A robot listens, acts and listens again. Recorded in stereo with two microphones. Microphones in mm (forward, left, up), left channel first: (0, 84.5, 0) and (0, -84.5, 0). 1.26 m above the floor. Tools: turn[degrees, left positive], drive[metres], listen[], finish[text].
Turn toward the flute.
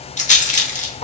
Action: listen[]
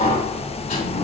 Action: listen[]
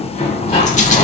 Action: finish[I can't make out a flute to turn to.]